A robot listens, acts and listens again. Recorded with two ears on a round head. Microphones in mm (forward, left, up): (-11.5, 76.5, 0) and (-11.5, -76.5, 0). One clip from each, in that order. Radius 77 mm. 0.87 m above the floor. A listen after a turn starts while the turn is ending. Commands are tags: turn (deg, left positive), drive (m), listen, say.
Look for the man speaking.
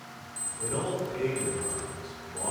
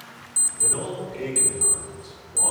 <turn deg="-30"/>
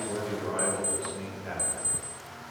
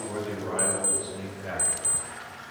<say>Facing the man speaking.</say>